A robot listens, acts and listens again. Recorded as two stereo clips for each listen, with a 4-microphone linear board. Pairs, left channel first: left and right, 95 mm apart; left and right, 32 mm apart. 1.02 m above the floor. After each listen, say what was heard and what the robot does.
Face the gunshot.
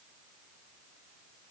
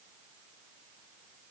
Keep listening.
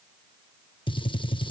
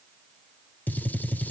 The gunshot: about 55° left or 125° left. Turn 55° left.
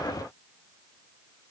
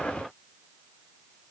Keep listening.
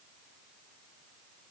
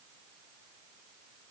I heard a gunshot, but can't make it out now. It was about straight ahead or 70° left.